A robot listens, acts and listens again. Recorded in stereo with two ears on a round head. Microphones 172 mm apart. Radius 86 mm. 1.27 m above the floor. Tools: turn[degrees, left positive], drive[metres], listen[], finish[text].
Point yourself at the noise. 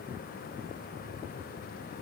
Action: listen[]
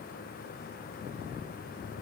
Action: listen[]
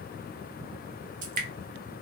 Thought: The dripping: about 45° right or 135° right.
Action: turn[-45]
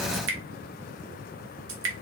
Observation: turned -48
Thought: So it is at 85° right.
Action: turn[-85]
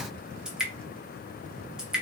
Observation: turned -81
Action: finish[Found it: dripping, straight ahead.]